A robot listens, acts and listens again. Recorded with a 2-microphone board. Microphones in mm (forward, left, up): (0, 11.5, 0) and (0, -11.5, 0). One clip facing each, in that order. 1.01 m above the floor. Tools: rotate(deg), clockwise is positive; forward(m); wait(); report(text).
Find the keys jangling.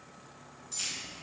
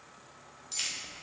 rotate(40)
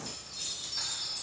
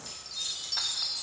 wait()
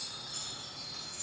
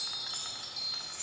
wait()
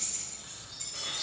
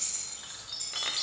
rotate(10)
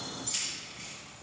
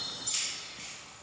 report("Found it: keys jangling, straight ahead, over 4 m away.")